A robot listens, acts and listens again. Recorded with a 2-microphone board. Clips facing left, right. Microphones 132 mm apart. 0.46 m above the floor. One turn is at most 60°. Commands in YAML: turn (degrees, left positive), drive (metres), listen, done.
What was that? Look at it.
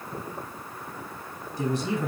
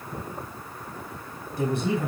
turn: -60
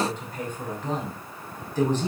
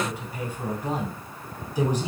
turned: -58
turn: -10
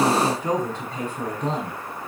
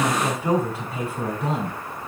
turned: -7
done: "Found it: a man speaking, straight ahead, over 4 m away."